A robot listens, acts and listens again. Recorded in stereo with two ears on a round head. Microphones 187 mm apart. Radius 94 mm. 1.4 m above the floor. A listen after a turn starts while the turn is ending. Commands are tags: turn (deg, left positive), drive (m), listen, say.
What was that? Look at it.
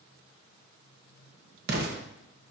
<turn deg="-50"/>
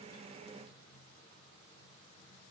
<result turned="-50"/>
<listen/>
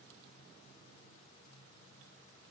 <say>I heard an explosion, but can't make it out now. It was about straight ahead or 80° right.</say>